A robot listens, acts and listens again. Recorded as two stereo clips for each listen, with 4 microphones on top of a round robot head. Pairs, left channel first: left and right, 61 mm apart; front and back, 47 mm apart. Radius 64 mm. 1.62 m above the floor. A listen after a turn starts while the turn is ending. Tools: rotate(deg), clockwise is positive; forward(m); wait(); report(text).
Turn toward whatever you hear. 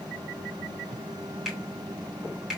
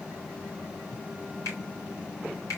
rotate(10)
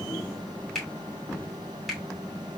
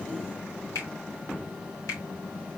report("Found it: a finger snap, straight ahead, 2 to 4 m away.")